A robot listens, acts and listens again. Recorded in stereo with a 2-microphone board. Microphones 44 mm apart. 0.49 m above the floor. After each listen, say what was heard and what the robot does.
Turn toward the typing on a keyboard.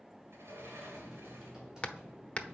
Turn 30° right.
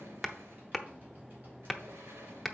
So it is at 135° right. Turn 135° right.
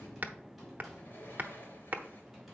Found it: typing on a keyboard, straight ahead.